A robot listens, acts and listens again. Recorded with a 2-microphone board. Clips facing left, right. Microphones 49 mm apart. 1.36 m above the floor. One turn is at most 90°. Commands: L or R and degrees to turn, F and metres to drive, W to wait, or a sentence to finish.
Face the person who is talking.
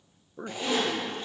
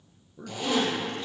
L40
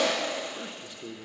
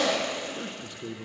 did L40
Found it: a man speaking, straight ahead.